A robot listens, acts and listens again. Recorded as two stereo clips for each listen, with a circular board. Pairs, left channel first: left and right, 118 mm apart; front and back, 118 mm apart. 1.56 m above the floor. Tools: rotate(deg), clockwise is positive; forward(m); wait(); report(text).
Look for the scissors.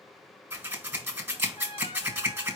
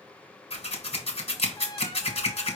rotate(20)
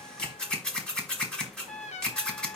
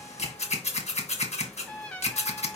report("Found it: scissors, straight ahead, 1 to 2 m away.")